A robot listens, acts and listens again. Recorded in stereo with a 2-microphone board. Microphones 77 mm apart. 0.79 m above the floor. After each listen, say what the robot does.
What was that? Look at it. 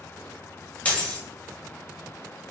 Turn 20° left.
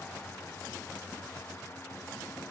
Keep listening.
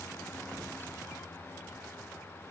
I heard a dropped coin, but can't make it out now. It was about straight ahead or 140° left.